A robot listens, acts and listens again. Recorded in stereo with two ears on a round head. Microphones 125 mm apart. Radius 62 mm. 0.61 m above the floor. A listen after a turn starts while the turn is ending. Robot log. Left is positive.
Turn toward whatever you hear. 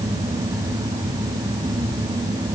cmd idle
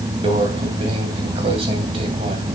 note: The microwave: about 40° right or 140° right.
cmd yaw -40
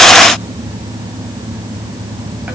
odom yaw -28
cmd idle
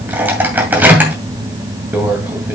note: So it is at 15° right.
cmd yaw -15
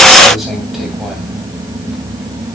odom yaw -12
cmd idle
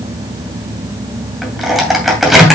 end: Found it: a microwave, straight ahead.